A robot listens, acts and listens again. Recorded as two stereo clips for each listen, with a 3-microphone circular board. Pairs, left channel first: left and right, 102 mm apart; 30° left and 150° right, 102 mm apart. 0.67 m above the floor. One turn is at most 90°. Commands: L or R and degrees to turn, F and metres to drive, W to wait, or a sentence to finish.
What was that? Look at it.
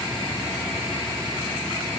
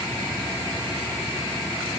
W
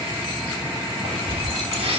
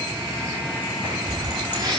R90
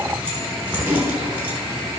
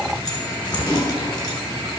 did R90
R15
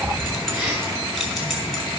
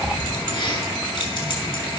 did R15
Found it: keys jangling, straight ahead.